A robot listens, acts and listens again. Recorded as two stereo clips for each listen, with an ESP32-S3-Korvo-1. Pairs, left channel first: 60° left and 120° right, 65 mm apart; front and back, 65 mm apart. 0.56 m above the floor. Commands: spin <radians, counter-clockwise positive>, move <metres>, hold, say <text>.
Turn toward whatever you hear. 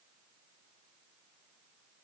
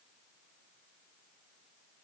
hold
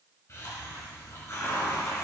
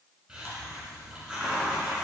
spin 1.66
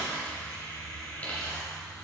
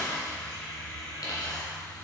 spin -0.17
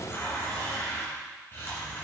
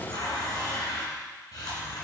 say Found it: a hiss, straight ahead, 2 to 4 m away.